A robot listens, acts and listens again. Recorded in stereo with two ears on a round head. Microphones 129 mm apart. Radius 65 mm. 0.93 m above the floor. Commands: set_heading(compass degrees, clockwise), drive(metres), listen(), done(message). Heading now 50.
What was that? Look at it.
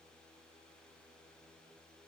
listen()
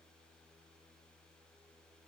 listen()
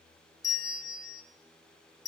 set_heading(25)
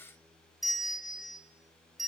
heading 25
done("Found it: a bell, straight ahead.")